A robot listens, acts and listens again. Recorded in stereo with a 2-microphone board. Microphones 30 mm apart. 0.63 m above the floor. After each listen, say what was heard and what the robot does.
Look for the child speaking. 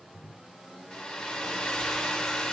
Keep listening.
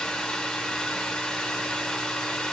Keep listening.
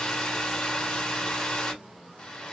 I can't make out a child speaking, only a hair dryer.